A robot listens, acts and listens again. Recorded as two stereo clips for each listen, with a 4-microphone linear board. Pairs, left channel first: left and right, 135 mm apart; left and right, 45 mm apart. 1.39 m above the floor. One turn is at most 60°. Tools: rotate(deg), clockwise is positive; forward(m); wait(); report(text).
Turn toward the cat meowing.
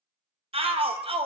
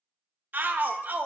rotate(-50)
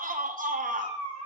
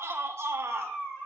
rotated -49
rotate(-60)
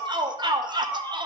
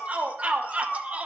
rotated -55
rotate(-35)
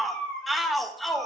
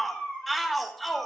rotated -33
rotate(-10)
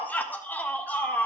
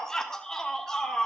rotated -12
wait()
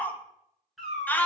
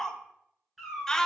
report("Facing the cat meowing, over 4 m away.")